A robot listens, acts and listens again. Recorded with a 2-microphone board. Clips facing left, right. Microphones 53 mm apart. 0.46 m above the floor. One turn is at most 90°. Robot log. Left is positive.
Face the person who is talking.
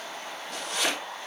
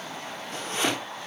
cmd idle
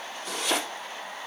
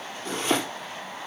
cmd idle
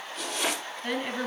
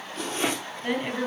cmd yaw -30
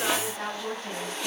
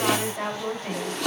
note: So it is at 130° right.
cmd yaw -90
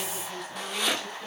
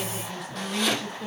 end: Facing the woman speaking.